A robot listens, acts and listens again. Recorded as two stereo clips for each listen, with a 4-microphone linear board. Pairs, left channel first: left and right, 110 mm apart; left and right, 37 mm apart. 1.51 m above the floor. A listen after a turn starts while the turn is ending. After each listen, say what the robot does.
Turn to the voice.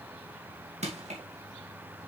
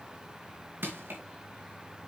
Keep listening.
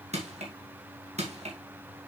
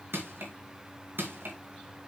Keep listening.
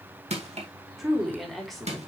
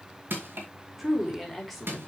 Turn 30° left.
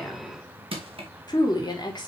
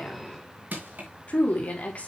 Turn 140° left.
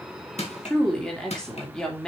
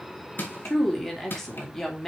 Found it: a woman speaking, straight ahead.